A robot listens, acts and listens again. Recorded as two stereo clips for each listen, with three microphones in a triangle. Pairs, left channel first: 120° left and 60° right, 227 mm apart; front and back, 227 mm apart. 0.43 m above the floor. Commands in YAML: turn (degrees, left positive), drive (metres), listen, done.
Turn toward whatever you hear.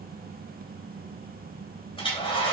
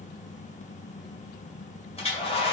turn: 60
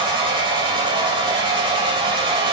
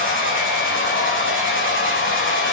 done: "Found it: a hair dryer, straight ahead, 2 to 4 m away."